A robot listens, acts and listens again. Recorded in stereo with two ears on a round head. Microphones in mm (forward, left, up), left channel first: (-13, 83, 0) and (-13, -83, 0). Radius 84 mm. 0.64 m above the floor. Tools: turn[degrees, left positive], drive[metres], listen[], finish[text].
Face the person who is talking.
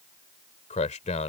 Thought: The man speaking: about 40° left or 140° left.
Action: turn[40]
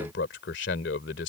Thought: So it is at 100° left.
Action: turn[100]
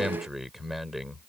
Action: finish[Facing the man speaking.]